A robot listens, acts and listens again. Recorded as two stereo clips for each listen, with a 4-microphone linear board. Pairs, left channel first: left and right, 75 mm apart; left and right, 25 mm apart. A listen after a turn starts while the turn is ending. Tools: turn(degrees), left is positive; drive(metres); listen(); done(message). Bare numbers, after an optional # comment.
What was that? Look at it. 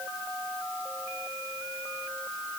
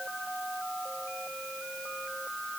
listen()
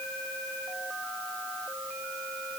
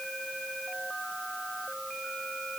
listen()
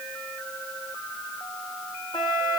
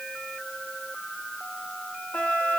turn(90)
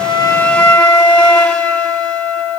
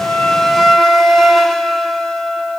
# So it is at 10° left.
turn(10)
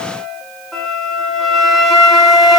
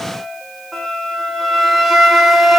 done("Facing the flute, 1 to 2 m away.")